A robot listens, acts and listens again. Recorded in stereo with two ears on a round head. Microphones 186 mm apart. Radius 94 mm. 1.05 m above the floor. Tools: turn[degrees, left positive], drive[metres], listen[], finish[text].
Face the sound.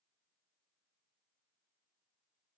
Action: listen[]
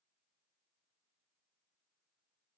Action: listen[]
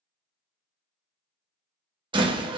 Thought: The door slam: about 25° right or 155° right.
Action: turn[-25]
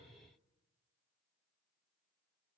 Action: listen[]
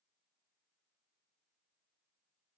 Action: finish[I heard a door slam, but can't make it out now. It was about straight ahead or 130° right.]